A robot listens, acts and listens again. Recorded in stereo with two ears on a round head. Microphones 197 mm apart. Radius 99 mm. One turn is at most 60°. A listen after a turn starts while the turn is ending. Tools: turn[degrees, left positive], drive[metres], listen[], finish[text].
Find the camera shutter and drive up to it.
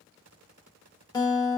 Action: listen[]
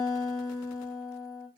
Action: listen[]
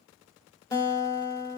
Action: finish[I can't make out a camera shutter, only a guitar.]